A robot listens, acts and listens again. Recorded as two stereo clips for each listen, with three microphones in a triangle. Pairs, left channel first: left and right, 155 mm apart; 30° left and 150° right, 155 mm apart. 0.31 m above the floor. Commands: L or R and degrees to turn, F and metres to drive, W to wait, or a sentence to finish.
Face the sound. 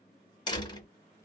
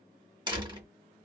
L150
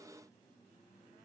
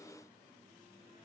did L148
I heard a door slam from this way, but can't make it out now.